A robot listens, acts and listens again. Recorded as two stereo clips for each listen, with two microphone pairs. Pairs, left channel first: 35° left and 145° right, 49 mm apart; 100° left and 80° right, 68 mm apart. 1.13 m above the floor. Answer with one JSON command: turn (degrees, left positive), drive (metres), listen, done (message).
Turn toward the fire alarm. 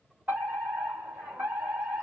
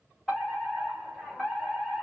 {"turn": 180}
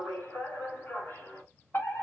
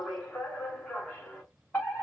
{"turn": 40}
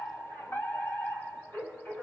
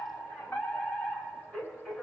{"turn": 30}
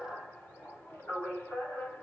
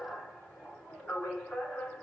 {"turn": 25}
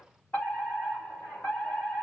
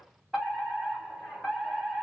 {"turn": 10}
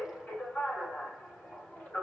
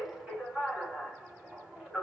{"done": "Found it: a fire alarm, straight ahead."}